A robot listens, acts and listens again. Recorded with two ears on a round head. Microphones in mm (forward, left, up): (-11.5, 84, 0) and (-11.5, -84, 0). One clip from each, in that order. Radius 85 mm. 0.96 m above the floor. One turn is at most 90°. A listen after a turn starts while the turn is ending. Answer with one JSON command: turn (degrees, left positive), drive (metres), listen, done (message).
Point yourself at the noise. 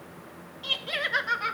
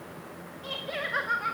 {"turn": 65}
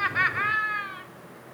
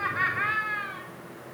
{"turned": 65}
{"turn": 25}
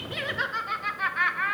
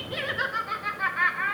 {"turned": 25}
{"turn": 25}
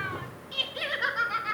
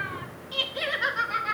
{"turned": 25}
{"turn": 10}
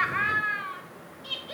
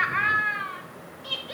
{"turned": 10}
{"done": "Facing the laughter, 2 to 4 m away."}